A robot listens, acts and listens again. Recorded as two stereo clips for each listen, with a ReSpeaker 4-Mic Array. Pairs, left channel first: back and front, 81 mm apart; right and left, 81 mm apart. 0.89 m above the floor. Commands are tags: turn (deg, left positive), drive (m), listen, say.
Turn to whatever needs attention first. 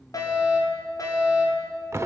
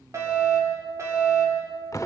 <turn deg="140"/>
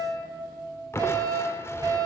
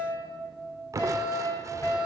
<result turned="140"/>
<turn deg="-40"/>
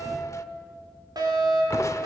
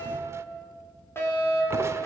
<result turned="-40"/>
<turn deg="-30"/>
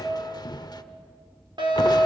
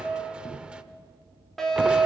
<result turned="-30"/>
<say>Facing the fire alarm, over 4 m away.</say>